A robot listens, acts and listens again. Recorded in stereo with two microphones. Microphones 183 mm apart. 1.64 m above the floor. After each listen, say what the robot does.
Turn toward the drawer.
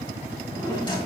Turn 25° left.
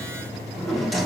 Facing the drawer, 2 to 4 m away.